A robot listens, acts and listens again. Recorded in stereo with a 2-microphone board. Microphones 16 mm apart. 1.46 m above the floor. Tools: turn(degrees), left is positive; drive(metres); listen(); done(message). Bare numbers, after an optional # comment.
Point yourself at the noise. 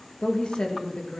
turn(90)
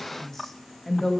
# So it is at 25° left.
turn(25)
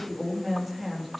done("Found it: a woman speaking, straight ahead.")